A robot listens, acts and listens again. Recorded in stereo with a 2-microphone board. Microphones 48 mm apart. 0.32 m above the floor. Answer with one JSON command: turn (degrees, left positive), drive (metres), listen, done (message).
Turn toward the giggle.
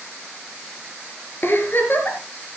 {"turn": 50}
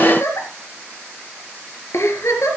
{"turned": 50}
{"turn": 80}
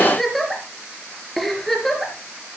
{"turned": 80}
{"done": "Found it: a giggle, straight ahead."}